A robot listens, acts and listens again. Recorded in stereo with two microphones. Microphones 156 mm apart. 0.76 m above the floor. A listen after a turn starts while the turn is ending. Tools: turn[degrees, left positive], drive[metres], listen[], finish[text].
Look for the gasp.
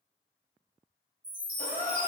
Thought: The gasp: about 60° left or 120° left.
Action: turn[60]
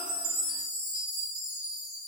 Action: listen[]
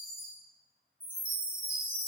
Action: finish[I heard a gasp, but can't make it out now. It was about straight ahead or 60° left.]